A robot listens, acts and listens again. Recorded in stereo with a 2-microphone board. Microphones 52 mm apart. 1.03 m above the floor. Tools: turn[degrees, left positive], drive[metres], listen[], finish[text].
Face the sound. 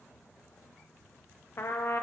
Thought: The trumpet: about 55° left or 125° left.
Action: turn[55]
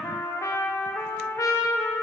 Thought: So it is at 75° left.
Action: turn[75]
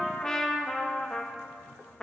Thought: The trumpet is now 15° left.
Action: turn[15]
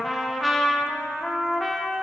Action: finish[Found it: a trumpet, straight ahead, under 1 m away.]